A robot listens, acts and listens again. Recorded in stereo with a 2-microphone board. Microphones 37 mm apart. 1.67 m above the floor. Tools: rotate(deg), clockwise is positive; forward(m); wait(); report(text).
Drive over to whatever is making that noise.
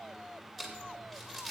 rotate(-30)
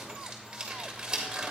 rotate(20)
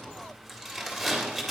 forward(1.0)
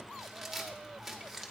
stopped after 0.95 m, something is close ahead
report("Arrived at the crumpling, straight ahead.")